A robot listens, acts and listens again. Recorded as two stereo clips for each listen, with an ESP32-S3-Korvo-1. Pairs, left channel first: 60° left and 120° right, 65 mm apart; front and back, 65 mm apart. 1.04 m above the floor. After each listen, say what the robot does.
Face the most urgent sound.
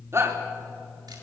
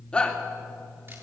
Turn 75° right.
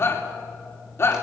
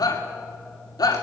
Turn 10° left.
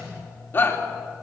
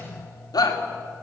Facing the shout, 2 to 4 m away.